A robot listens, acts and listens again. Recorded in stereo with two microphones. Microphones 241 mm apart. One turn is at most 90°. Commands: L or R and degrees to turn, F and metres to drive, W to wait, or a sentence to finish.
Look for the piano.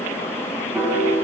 R30
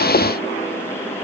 W
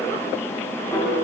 L20
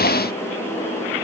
W
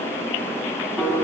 Facing the piano.